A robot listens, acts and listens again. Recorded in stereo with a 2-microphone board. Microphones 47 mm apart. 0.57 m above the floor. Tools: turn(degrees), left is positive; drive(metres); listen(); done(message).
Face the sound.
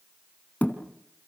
turn(degrees=30)
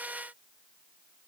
listen()
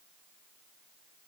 done("I heard a thud, but can't make it out now. It was about straight ahead or 120° left.")